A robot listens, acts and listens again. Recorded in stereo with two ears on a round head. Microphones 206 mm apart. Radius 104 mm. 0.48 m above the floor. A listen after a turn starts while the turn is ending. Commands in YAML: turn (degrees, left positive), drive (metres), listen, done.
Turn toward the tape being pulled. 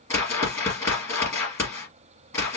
listen: true
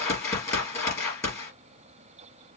listen: true
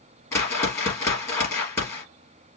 done: "I can't make out tape being pulled, only a whoosh."